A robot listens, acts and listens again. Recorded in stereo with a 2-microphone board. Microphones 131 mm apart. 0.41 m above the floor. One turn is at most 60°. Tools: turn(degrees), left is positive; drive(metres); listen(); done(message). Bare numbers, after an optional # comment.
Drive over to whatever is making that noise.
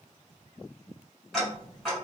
turn(30)
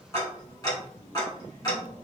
# So it is at 150° left.
turn(60)
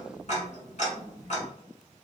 # The ticking is now 95° left.
turn(60)
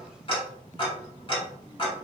# The ticking is now 50° left.
turn(50)
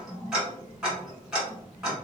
drive(1.0)
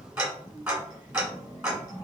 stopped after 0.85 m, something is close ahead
# The ticking is now 15° right.
turn(-15)
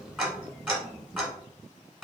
done("Arrived at the ticking, straight ahead.")